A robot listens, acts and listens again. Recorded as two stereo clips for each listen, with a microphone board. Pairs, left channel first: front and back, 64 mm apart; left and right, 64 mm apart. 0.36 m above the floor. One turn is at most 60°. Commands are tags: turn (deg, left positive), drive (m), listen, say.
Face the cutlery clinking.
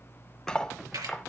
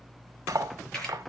<turn deg="-60"/>
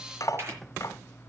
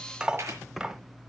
<turn deg="-15"/>
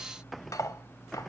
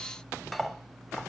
<say>Facing the cutlery clinking.</say>